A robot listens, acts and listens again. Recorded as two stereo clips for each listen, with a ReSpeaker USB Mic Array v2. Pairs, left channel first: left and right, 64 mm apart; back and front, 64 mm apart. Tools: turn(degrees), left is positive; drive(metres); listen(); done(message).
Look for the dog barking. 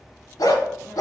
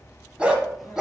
turn(degrees=85)
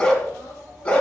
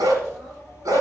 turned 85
turn(degrees=20)
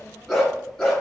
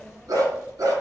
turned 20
turn(degrees=15)
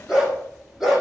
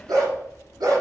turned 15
done("Found it: a dog barking, straight ahead, 2 to 4 m away.")